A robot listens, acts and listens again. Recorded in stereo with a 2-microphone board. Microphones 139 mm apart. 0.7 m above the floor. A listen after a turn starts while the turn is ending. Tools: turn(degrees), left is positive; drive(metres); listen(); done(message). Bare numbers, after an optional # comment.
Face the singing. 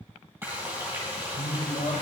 turn(90)
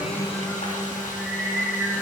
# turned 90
# So it is at 10° right.
turn(-10)
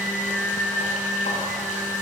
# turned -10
done("Found it: singing, straight ahead.")